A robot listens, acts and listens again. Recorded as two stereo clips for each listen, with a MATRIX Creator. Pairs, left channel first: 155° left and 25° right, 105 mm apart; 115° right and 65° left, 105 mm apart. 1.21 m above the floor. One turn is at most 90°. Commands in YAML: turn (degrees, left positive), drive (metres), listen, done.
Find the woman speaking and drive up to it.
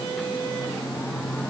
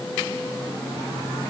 listen: true
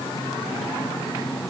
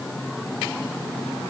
listen: true
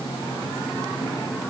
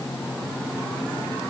done: "I can't make out a woman speaking."